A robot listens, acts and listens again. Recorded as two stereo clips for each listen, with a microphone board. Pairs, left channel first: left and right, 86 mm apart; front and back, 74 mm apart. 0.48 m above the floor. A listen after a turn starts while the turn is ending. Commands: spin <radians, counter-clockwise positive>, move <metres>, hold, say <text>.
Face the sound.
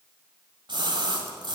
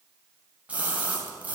spin -1.92
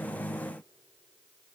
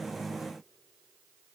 say I heard a splash from this way, but can't make it out now.